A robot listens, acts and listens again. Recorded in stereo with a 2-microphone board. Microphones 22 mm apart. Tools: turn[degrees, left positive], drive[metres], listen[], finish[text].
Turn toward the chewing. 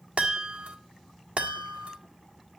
Action: listen[]
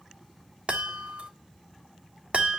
Action: listen[]
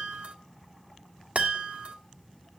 Action: finish[I can't make out chewing to turn to.]